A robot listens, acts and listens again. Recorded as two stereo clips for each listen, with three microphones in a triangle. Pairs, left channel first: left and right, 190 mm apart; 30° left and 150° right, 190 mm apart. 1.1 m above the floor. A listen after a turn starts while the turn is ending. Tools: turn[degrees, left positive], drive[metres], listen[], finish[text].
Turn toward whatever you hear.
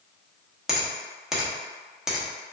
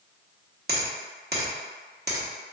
Thought: The finger snap: 175° right.
Action: turn[-175]
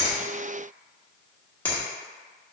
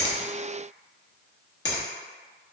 Thought: The finger snap is now 10° left.
Action: turn[10]
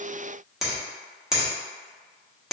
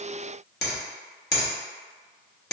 Action: finish[Found it: a finger snap, straight ahead.]